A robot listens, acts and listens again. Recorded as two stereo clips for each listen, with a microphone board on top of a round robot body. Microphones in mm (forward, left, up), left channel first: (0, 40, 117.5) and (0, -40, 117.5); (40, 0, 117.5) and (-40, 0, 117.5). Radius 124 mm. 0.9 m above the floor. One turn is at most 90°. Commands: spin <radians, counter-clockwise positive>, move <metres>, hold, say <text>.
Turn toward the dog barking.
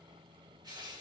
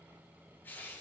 hold
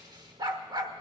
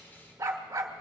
spin -1.57
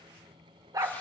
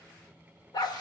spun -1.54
spin -0.70
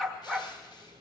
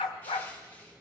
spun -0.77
say Found it: a dog barking, straight ahead.